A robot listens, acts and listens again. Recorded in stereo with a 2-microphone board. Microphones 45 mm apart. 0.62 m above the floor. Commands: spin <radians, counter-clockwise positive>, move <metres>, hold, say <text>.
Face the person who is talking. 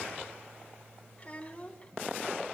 spin 0.52
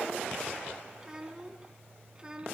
spin -0.35
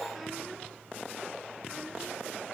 hold
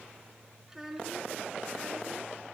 spin -0.17
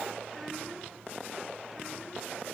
hold
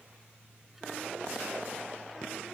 hold
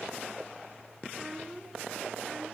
say Found it: a child speaking, straight ahead.